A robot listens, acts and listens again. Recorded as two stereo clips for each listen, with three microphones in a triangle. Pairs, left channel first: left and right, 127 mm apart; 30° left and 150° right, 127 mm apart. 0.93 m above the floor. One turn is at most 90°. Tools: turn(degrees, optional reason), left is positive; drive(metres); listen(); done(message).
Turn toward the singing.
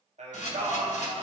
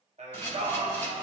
turn(degrees=-90, reason="The singing: 115° right.")
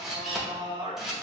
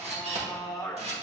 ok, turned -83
turn(degrees=-35, reason="The singing is now 35° right.")
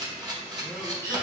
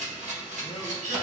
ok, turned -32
listen()
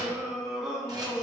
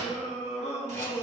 done("Facing the singing, under 1 m away.")